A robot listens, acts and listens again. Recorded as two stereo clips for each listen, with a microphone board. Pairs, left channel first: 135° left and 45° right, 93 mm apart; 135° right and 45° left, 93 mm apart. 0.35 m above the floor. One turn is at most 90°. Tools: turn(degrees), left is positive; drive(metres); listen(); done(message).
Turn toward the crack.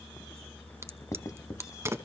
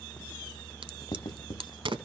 turn(degrees=15)
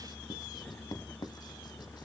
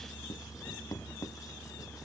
done("I heard a crack from this way, but can't make it out now.")